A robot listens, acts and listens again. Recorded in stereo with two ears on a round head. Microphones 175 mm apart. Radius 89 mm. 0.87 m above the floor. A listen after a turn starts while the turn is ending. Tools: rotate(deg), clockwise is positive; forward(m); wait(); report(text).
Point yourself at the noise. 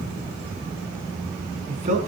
rotate(40)
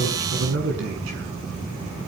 rotate(105)
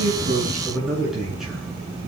report("Facing the man speaking, over 4 m away.")